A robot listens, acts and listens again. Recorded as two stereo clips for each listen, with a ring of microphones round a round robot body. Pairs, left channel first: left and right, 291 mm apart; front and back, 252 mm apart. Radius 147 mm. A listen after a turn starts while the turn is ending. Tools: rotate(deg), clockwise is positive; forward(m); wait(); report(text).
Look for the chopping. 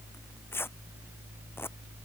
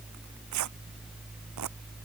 wait()
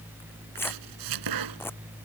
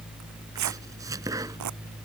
rotate(100)
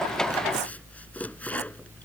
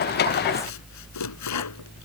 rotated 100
report("Found it: chopping, straight ahead.")